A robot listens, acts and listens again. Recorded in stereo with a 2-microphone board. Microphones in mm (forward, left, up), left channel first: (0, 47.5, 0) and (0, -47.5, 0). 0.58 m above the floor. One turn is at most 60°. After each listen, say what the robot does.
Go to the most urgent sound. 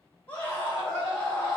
Turn 30° left.
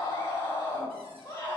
Turn 60° left.
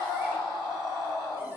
Turn 60° left.
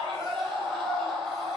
Turn 10° left.
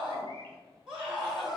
Drive 1.0 m forward.
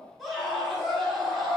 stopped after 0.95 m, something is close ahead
I am next to the scream.